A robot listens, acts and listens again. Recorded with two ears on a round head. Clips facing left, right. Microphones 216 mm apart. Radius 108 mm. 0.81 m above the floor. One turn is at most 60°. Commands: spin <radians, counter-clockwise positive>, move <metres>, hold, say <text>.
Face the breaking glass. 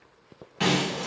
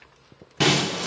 spin -1.05
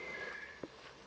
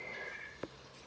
hold
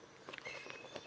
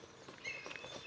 say I heard breaking glass, but can't make it out now. It was about straight ahead or 60° right.